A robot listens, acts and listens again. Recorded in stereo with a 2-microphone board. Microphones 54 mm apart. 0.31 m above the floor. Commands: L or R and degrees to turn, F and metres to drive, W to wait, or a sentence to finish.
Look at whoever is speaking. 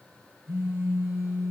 W
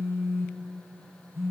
W
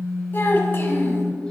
L50
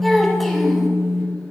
Found it: a child speaking, straight ahead.